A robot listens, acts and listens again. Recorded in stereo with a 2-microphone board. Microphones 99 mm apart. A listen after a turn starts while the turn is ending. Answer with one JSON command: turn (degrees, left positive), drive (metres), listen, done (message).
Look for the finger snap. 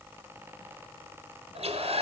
{"listen": true}
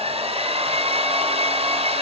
{"listen": true}
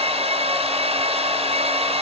{"done": "I can't make out a finger snap to turn to."}